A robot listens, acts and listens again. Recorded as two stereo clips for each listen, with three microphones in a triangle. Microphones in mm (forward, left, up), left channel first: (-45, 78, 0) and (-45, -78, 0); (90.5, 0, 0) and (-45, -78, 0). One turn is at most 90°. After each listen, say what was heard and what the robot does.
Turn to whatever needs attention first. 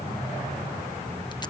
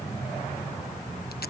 Keep listening.
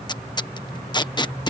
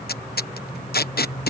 Keep listening.
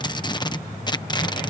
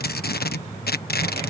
I can't make out anything urgent, only tape being pulled.